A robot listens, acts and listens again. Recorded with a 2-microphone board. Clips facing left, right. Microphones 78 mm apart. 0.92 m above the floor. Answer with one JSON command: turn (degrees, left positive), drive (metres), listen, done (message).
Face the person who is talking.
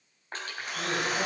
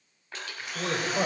{"turn": -60}
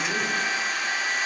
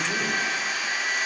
{"listen": true}
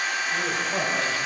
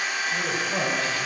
{"done": "Found it: a man speaking, straight ahead."}